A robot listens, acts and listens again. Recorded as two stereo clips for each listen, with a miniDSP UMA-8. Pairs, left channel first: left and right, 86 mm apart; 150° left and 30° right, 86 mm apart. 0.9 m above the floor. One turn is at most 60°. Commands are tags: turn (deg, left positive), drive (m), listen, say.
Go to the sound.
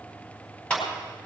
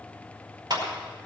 <turn deg="10"/>
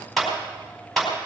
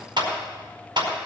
<drive m="1.0"/>
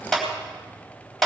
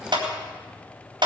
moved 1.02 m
<drive m="1.0"/>
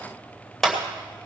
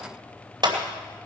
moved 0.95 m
<drive m="1.0"/>
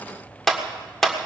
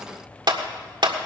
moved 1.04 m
<drive m="1.0"/>
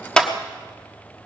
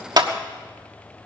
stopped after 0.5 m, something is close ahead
<turn deg="10"/>
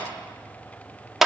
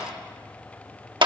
<say>Arrived at the clap, straight ahead.</say>